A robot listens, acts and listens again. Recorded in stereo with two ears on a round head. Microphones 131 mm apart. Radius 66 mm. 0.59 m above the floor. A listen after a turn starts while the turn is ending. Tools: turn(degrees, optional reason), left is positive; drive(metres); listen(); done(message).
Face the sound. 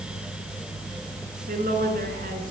turn(degrees=-70, reason="The woman speaking: about 70° right or 110° right.")
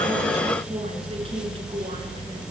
listen()
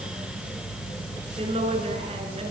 turn(degrees=-40, reason="So it is at 40° right.")
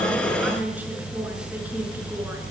listen()
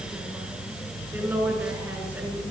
turn(degrees=-15, reason="The woman speaking is now 15° right.")
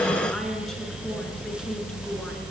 listen()
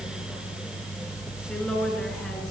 done("Found it: a woman speaking, straight ahead, over 4 m away.")